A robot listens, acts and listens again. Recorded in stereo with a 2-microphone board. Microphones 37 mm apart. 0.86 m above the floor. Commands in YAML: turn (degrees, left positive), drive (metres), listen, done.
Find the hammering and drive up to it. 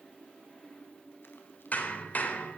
turn: 50
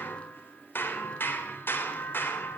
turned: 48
turn: 85
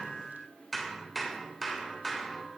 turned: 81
drive: 1.0
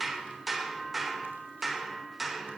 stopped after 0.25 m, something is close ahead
done: "Something is in my way. I am facing the hammering but have not reached it."